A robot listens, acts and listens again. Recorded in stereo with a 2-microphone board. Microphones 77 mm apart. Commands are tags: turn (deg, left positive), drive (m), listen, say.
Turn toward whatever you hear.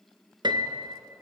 <turn deg="-90"/>
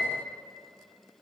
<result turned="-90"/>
<turn deg="10"/>
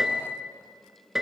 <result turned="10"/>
<say>Facing the piano.</say>